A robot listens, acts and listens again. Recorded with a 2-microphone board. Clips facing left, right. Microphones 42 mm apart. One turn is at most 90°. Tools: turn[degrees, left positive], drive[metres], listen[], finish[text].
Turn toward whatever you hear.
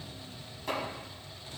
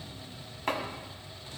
Thought: The chopping: about 50° right or 130° right.
Action: turn[-50]
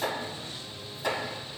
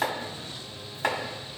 Thought: So it is at 70° right.
Action: turn[-70]
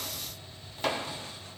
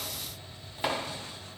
Thought: The chopping is now 15° right.
Action: turn[-15]
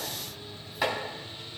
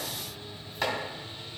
Action: finish[Found it: chopping, straight ahead.]